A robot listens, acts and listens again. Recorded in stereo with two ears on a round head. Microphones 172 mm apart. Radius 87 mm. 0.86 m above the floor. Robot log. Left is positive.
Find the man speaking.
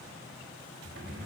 cmd idle
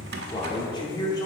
note: The man speaking: about 20° left or 160° left.
cmd yaw +20
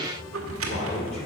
cmd idle
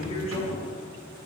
note: The man speaking: about 35° left or 145° left.
cmd yaw +35
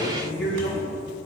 note: So it is at 120° left.
cmd yaw +120
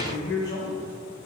note: The man speaking is now 20° left.
cmd yaw +20
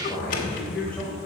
end: Facing the man speaking, over 4 m away.